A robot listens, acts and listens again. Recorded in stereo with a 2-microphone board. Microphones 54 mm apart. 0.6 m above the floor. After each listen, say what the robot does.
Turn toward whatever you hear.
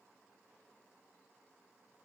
Keep listening.
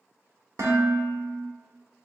Turn 75° right.
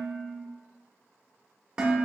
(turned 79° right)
Turn 15° right.
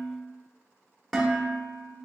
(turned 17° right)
Facing the dishes clattering, 1 to 2 m away.